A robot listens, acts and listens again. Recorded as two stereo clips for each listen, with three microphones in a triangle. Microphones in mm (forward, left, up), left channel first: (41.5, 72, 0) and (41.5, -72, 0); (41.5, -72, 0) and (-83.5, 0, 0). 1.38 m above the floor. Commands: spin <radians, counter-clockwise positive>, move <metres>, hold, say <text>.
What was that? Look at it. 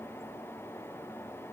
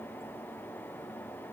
hold
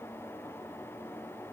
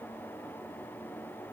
hold
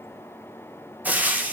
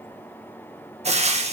spin -2.97
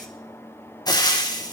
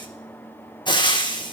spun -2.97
spin 0.44
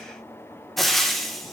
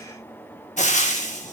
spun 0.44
say Found it: frying, straight ahead, 1 to 2 m away.